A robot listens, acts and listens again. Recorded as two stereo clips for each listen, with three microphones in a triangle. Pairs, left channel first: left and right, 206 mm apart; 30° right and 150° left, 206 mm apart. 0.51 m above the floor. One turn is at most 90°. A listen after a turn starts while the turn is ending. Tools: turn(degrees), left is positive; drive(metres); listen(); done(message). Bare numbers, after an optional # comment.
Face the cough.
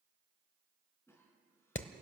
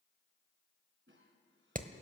# The cough: 165° left.
turn(90)
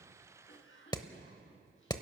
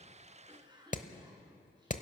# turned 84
# The cough is now 85° left.
turn(85)
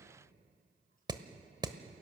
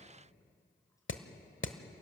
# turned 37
# Nothing new. It was at 45° left.
turn(45)
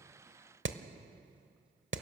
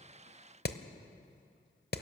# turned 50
listen()
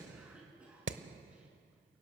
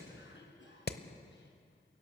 done("Found it: a cough, straight ahead.")